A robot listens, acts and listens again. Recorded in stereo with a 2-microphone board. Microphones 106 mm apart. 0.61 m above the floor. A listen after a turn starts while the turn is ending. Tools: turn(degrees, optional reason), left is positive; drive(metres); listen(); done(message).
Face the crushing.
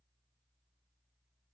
listen()
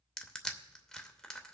turn(degrees=30)
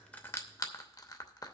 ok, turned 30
turn(degrees=145, reason="So it is at 145° left.")
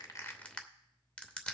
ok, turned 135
turn(degrees=10, reason="The crushing is now 10° left.")
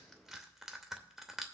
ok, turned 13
done("Facing the crushing, under 1 m away.")